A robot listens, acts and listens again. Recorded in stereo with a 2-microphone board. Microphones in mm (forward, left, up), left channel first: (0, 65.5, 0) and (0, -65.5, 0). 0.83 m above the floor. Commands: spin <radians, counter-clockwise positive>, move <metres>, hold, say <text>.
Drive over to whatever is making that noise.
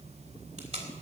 spin -0.87
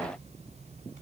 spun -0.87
hold
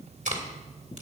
spin -1.31
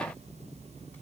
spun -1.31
hold
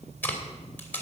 spin 0.26
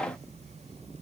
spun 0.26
hold
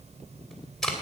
move 1.0
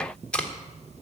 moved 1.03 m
spin 0.17
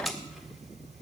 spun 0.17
move 1.0
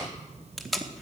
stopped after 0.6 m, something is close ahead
say I am next to the tape being pulled.